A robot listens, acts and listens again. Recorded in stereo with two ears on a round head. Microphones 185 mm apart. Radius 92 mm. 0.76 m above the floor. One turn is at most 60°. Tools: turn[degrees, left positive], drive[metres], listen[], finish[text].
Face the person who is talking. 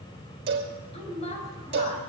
Thought: The woman speaking: about 30° left or 150° left.
Action: turn[30]
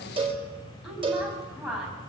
Action: finish[Found it: a woman speaking, straight ahead.]